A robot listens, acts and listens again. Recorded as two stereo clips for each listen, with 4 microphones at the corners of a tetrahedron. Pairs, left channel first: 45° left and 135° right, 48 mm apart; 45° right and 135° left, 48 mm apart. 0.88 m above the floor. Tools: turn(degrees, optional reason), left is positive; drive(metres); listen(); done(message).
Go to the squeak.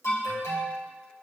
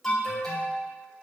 listen()
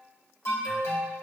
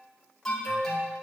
listen()
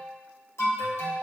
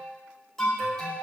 done("I can't make out a squeak to turn to.")